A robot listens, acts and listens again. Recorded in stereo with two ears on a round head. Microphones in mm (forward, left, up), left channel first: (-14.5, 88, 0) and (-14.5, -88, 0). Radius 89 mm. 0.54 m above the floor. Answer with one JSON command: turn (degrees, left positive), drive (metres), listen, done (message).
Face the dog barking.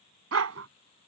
{"turn": -90}
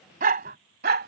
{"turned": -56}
{"turn": -50}
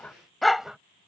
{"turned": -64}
{"done": "Facing the dog barking."}